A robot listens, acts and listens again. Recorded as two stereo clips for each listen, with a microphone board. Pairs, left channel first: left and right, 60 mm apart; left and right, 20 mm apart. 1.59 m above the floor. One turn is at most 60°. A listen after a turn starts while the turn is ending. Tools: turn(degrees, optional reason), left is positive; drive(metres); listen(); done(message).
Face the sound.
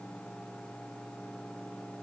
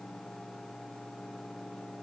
listen()
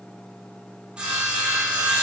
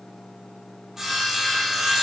turn(degrees=-15, reason="The sawing: about 15° right or 165° right.")
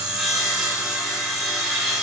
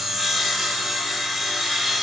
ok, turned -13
done("Found it: sawing, straight ahead, 1 to 2 m away.")